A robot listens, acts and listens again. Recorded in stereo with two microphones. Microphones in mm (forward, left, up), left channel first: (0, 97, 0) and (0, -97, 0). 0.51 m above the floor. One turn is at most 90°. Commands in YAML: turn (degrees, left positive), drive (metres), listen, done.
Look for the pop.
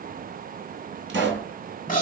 turn: -90
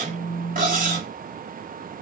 done: "I heard a pop from this way, but can't make it out now."